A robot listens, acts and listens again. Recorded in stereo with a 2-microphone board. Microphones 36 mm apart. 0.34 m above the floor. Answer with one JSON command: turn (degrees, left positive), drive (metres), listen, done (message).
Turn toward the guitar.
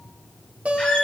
{"turn": -40}
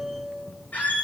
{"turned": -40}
{"done": "Facing the guitar."}